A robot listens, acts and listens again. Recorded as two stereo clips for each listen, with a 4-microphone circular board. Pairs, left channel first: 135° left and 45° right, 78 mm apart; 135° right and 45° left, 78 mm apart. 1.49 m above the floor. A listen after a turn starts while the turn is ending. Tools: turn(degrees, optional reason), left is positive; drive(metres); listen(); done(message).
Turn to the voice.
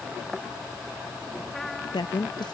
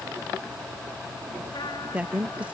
turn(degrees=115, reason="The woman speaking: 115° left.")
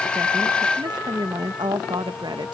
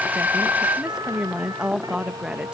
turn(degrees=-35, reason="The woman speaking is now 35° right.")
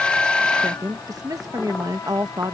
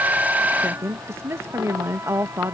turn(degrees=-10, reason="The woman speaking is now 10° right.")
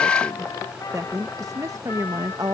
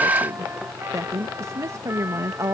done("Facing the woman speaking.")